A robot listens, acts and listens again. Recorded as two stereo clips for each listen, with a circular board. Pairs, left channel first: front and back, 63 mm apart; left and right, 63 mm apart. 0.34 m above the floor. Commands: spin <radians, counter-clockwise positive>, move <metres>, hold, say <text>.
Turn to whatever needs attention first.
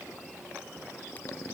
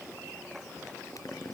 hold
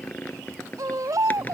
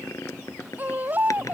spin -2.62
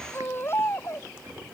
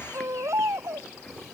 spin -0.79
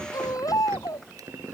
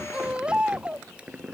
spin -0.26
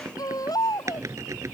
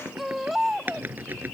say Facing the baby crying.